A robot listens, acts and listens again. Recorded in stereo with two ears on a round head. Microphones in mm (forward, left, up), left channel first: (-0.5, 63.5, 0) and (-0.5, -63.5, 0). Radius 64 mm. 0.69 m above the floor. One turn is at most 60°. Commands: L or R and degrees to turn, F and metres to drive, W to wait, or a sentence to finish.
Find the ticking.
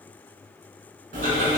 R55
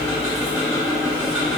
R10
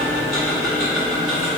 Facing the ticking, 1 to 2 m away.